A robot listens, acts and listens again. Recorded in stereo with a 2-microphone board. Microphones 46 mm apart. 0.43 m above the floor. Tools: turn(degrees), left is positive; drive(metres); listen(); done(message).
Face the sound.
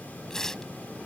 turn(degrees=30)
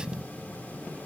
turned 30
listen()
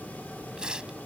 turn(degrees=-20)
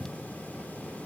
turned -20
listen()
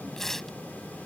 done("Found it: tearing paper, straight ahead.")